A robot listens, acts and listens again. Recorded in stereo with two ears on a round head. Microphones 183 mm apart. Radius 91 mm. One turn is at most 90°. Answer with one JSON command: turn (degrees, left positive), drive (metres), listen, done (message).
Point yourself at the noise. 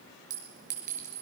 {"turn": -35}
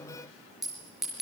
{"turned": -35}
{"done": "Facing the clink."}